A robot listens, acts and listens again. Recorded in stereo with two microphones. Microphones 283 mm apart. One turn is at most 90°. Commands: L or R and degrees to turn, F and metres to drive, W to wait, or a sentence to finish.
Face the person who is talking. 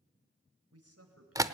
R65
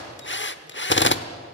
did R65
W
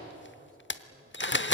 W
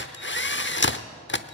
I heard a man speaking, but can't make it out now. It was about straight ahead or 50° right.